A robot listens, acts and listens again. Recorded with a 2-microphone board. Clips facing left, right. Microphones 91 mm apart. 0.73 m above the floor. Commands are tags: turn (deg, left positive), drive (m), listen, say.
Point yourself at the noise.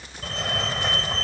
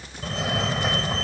<turn deg="-30"/>
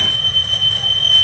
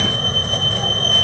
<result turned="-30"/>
<turn deg="-145"/>
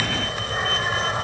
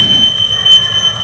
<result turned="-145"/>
<turn deg="15"/>
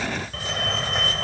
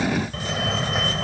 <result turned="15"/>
<say>Found it: a fire alarm, straight ahead.</say>